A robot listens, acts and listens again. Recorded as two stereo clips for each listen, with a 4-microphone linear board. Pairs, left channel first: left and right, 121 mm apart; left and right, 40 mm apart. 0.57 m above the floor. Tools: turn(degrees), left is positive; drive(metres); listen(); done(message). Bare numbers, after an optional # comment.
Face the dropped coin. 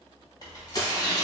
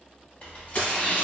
# The dropped coin: about 40° left or 140° left.
turn(40)
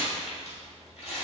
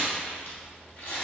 listen()
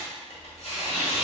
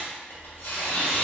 done("I heard a dropped coin, but can't make it out now. It was about straight ahead or 100° left.")